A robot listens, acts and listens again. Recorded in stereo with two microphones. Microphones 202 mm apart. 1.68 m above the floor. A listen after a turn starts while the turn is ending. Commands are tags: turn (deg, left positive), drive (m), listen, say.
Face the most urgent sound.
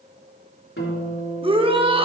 <turn deg="-25"/>
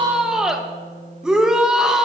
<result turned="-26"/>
<say>Found it: a shout, straight ahead.</say>